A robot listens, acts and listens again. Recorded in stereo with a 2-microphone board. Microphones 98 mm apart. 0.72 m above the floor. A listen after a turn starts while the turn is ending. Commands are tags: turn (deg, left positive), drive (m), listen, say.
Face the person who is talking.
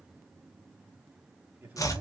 <turn deg="-15"/>
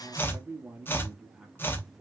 <turn deg="30"/>
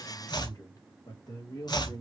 <turn deg="130"/>
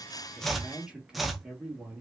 <turn deg="-10"/>
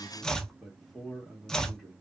<say>Facing the man speaking, 2 to 4 m away.</say>